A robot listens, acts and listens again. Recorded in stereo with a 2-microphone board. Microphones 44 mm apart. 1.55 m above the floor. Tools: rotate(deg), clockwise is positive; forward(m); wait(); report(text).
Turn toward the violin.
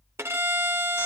rotate(90)
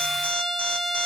rotate(-10)
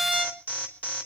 report("Facing the violin.")